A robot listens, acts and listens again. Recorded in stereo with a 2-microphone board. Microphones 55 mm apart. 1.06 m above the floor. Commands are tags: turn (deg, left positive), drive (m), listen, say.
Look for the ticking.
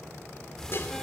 <turn deg="30"/>
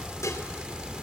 <turn deg="-20"/>
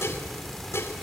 <say>Found it: ticking, straight ahead, 1 to 2 m away.</say>